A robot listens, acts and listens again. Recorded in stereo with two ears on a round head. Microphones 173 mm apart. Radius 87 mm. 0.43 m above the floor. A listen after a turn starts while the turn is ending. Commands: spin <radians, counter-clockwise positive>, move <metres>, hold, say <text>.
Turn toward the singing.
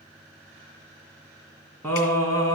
spin 0.35
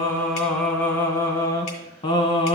spin 0.52
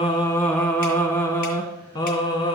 spin 0.44
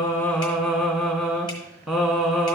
say Facing the singing, 1 to 2 m away.